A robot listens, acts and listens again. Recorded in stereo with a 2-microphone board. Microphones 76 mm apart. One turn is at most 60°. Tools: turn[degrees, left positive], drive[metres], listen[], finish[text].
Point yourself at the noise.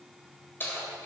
Thought: The keys jangling: about 30° left or 150° left.
Action: turn[30]
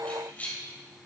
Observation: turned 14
Thought: The keys jangling: about 20° left or 160° left.
Action: turn[20]
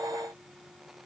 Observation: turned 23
Action: listen[]
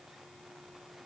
Action: listen[]
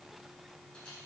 Action: finish[I heard keys jangling, but can't make it out now. It was about straight ahead or 135° left.]